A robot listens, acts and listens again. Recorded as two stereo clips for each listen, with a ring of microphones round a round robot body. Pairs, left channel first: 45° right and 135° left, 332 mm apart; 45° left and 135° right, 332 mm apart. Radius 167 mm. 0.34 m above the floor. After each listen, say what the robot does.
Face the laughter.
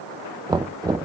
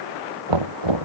Keep listening.
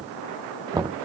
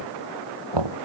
Keep listening.
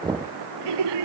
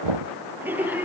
Turn 140° left.
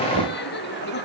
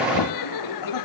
Turn 15° left.
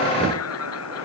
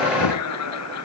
Found it: laughter, straight ahead.